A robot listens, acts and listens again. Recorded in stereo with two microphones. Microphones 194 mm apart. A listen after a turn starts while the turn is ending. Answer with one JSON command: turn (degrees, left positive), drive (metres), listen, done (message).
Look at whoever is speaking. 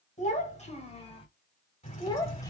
{"turn": 20}
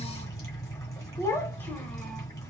{"turn": 30}
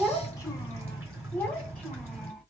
{"turn": 30}
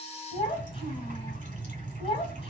{"turn": 150}
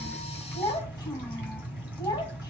{"turn": 15}
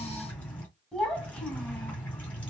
{"done": "Found it: a child speaking, straight ahead, 1 to 2 m away."}